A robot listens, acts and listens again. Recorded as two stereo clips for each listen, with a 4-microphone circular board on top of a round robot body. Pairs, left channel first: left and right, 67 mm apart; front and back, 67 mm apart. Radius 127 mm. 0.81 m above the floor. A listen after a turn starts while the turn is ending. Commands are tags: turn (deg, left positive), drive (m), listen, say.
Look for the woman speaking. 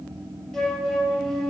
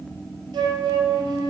<listen/>
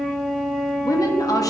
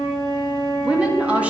<turn deg="110"/>
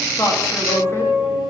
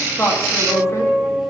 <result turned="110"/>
<listen/>
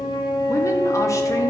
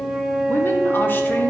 <listen/>
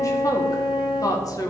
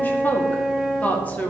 <turn deg="65"/>
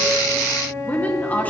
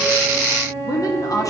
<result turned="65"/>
<turn deg="25"/>
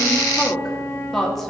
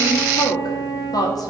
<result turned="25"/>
<say>Found it: a woman speaking, straight ahead.</say>